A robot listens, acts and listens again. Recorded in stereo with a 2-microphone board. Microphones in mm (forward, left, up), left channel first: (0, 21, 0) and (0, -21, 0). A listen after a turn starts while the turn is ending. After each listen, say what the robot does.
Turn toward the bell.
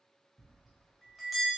Turn 30° left.
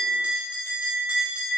Turn 30° right.
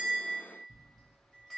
Found it: a bell, straight ahead, under 1 m away.